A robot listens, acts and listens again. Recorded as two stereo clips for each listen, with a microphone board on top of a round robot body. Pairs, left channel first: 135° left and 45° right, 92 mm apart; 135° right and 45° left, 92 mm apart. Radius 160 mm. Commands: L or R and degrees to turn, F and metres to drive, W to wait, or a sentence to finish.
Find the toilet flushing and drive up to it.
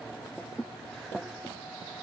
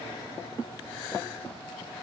W
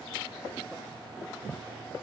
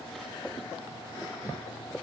W
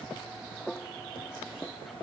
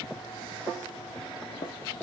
I can't make out a toilet flushing to turn to.